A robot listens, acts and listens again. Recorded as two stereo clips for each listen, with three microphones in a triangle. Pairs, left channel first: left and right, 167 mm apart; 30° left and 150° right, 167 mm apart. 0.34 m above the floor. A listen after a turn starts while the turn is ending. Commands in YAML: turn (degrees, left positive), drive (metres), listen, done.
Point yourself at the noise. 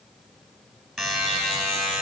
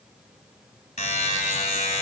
done: "Facing the buzzer."